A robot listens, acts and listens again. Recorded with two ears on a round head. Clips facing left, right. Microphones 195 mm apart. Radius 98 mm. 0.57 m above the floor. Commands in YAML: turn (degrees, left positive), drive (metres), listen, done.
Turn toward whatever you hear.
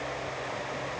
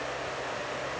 listen: true
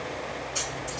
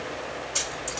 turn: -50
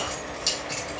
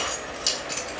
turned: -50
turn: -10
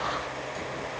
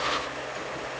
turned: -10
listen: true
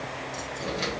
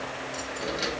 done: "Found it: keys jangling, straight ahead."